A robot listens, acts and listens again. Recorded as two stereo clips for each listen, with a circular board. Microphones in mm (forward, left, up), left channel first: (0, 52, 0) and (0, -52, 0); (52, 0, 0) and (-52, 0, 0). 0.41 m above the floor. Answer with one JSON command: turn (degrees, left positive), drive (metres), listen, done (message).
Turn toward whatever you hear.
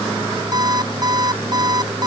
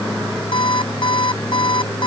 {"turn": -40}
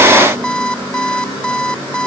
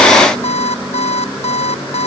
{"turn": 10}
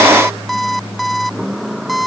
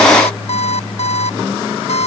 {"done": "Facing the alarm clock."}